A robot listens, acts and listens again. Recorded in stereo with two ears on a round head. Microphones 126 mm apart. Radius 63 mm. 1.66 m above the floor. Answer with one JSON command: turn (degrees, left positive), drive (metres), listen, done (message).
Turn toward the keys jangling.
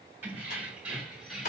{"turn": 30}
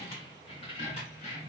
{"turn": 125}
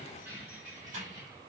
{"turn": -25}
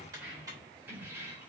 {"turn": -15}
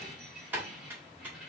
{"done": "Facing the keys jangling, 2 to 4 m away."}